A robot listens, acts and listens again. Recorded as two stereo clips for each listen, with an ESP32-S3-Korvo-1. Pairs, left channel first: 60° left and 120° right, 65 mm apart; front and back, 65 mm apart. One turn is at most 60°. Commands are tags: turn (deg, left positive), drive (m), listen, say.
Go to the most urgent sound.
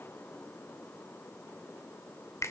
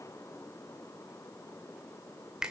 <listen/>
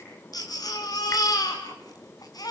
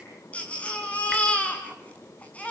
<turn deg="60"/>
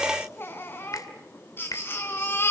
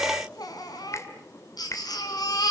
<drive m="1.0"/>
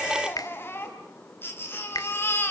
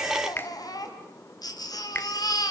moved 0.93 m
<drive m="1.0"/>
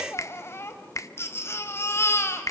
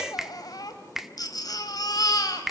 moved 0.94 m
<turn deg="10"/>
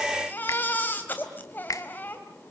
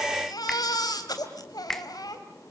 <drive m="1.0"/>
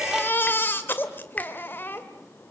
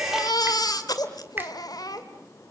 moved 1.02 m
<drive m="1.0"/>
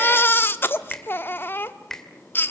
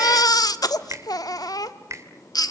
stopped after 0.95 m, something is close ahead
<say>Arrived at the baby crying, straight ahead.</say>